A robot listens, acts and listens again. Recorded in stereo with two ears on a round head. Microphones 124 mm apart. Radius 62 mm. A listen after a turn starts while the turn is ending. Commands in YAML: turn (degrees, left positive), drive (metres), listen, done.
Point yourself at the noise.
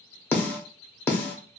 turn: 30
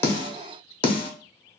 turn: 135
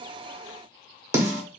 turn: -25
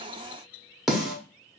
done: "Found it: a snare drum, straight ahead."